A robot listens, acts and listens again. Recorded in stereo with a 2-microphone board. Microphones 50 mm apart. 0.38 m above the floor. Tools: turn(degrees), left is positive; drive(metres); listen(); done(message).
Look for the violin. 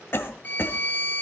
turn(degrees=40)
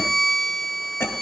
done("Facing the violin.")